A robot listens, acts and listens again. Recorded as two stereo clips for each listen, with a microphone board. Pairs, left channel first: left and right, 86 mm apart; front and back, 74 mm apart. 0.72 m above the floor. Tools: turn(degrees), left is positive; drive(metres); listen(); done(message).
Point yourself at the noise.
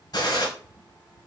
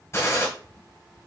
turn(degrees=55)
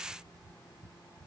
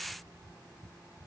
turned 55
done("I heard a gunshot from this way, but can't make it out now.")